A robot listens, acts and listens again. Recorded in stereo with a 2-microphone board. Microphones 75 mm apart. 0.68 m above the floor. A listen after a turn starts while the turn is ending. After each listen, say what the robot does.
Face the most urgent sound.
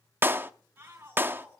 Turn 30° right.
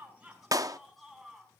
Found it: a shout, straight ahead, over 4 m away.